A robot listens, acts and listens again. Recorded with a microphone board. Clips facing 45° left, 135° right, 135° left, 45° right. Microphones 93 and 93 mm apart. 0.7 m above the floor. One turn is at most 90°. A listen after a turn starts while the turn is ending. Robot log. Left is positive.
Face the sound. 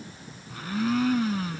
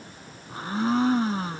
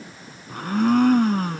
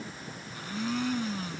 note: The blender: 165° left.
cmd yaw +90
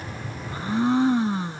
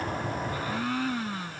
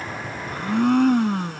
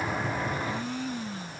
note: The blender is now 110° left.
cmd yaw +90
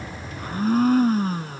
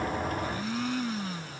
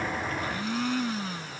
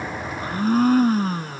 end: Found it: a blender, straight ahead.